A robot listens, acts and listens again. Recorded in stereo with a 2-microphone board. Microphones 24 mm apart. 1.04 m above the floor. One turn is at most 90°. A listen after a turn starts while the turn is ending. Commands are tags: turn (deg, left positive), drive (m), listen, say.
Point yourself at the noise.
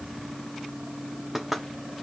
<turn deg="-30"/>
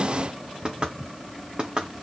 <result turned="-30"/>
<turn deg="-90"/>
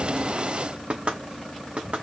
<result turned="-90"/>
<turn deg="-55"/>
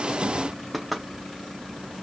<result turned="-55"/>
<say>Found it: knocking, straight ahead, 1 to 2 m away.</say>